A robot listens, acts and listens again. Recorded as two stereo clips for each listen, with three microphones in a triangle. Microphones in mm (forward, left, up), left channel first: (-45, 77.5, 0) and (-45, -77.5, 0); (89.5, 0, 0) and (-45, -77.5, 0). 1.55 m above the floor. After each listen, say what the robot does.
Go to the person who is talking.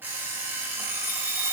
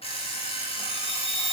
Keep listening.
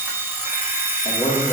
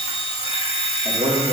Turn 155° left.
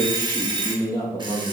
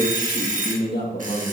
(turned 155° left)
Turn 25° left.
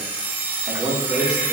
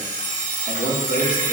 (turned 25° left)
Drive 1.0 m forward.
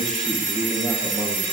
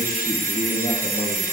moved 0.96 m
Drive 1.0 m forward.
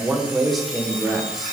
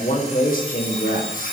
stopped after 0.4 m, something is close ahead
I am next to the man speaking.